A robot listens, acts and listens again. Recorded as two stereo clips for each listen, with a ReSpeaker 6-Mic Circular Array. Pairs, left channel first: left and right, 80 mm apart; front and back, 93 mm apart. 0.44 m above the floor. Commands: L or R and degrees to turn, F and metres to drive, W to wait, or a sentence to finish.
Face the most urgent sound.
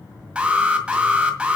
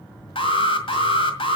R15
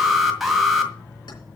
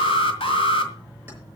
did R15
Found it: an alarm, straight ahead, 1 to 2 m away.